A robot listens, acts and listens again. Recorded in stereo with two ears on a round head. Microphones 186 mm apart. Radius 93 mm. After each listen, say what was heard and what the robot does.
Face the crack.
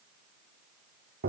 Keep listening.
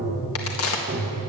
The crack: about 75° left or 105° left. Turn 75° left.
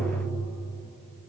Keep listening.
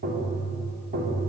I heard a crack, but can't make it out now. It was about straight ahead or 30° left.